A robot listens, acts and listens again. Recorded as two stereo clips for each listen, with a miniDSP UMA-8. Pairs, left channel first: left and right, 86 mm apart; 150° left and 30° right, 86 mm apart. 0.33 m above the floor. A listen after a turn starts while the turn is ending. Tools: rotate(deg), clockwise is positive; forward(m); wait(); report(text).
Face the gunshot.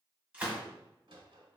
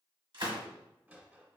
rotate(15)
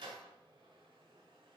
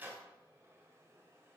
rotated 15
report("I heard a gunshot from this way, but can't make it out now.")